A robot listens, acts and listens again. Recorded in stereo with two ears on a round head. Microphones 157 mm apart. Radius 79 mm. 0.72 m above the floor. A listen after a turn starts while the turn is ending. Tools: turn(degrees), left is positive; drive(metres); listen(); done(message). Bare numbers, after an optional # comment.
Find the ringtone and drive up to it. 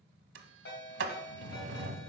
# The ringtone: about 70° left or 110° left.
turn(70)
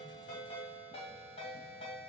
# So it is at 35° left.
turn(35)
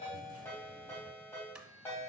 # The ringtone is now 15° left.
turn(15)
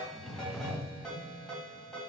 drive(1.0)
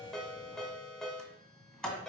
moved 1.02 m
drive(1.0)
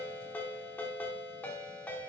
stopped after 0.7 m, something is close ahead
# The ringtone is now 10° left.
turn(10)
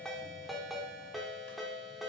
done("I am next to the ringtone.")